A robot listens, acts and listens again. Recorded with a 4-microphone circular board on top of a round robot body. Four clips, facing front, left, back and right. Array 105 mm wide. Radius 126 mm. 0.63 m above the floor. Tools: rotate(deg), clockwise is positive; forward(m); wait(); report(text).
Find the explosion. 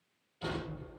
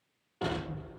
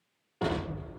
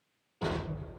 rotate(-160)
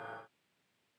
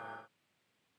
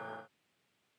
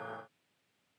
report("I heard an explosion from this way, but can't make it out now.")